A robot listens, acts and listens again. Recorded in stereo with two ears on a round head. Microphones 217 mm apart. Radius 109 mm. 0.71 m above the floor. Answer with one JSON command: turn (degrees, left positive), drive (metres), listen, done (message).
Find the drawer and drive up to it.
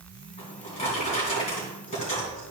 {"turn": 30}
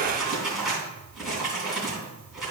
{"drive": 1.0}
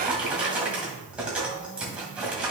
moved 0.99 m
{"drive": 1.0}
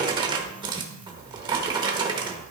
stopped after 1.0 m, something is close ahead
{"turn": -20}
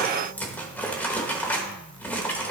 {"done": "I am next to the drawer."}